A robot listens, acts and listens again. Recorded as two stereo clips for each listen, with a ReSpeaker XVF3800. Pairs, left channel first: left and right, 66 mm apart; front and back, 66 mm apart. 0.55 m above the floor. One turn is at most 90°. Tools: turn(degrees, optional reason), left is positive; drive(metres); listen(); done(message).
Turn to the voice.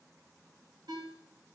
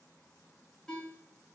listen()
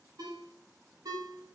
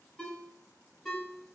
listen()
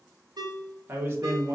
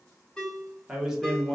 turn(degrees=-90, reason="The man speaking: 90° right.")
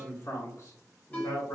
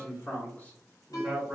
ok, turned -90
turn(degrees=65, reason="The man speaking is now 65° left.")
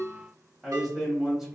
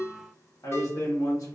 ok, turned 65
turn(degrees=-10, reason="The man speaking is now 10° right.")
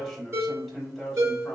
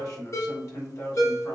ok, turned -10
done("Facing the man speaking.")